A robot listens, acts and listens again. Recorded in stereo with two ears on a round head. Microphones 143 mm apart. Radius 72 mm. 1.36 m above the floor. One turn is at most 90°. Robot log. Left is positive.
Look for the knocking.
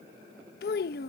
cmd idle
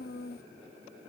cmd idle
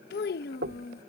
note: The knocking: about 70° right or 110° right.
cmd yaw -70
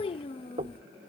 note: So it is at 35° right.
cmd yaw -35
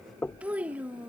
note: The knocking is now 10° left.
cmd yaw +10
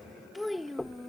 end: Facing the knocking.